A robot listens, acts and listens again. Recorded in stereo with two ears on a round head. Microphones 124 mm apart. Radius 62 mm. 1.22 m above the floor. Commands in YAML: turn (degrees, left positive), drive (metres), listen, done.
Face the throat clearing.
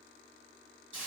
listen: true
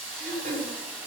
turn: -55
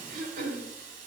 turn: -65
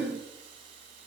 done: "Facing the throat clearing, 2 to 4 m away."